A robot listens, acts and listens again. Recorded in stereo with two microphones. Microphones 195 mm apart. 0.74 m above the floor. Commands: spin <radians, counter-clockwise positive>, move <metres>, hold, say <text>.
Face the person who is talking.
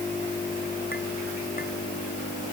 hold
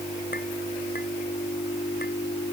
hold
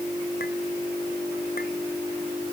say I can't make out anyone speaking.